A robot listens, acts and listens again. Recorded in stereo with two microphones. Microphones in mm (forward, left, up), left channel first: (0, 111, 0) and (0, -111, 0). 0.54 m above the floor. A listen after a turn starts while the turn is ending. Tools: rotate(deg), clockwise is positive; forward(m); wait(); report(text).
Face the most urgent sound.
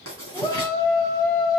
rotate(-15)
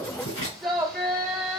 report("Facing the shout.")